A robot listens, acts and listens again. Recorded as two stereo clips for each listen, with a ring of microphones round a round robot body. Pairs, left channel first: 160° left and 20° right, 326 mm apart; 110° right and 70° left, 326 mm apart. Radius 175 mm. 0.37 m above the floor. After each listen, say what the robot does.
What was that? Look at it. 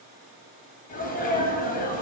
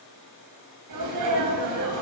Turn 95° left.
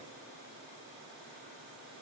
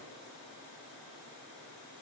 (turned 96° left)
I heard a sneeze from this way, but can't make it out now.